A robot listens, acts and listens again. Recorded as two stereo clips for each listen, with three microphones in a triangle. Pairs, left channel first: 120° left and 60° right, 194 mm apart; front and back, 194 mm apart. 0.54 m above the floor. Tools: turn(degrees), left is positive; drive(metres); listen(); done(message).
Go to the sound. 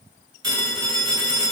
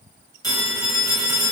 turn(degrees=-70)
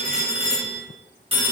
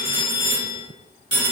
drive(metres=1.0)
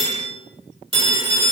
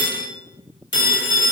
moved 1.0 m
drive(metres=1.0)
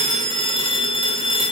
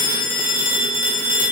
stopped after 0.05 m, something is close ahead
done("I am next to the phone ringing.")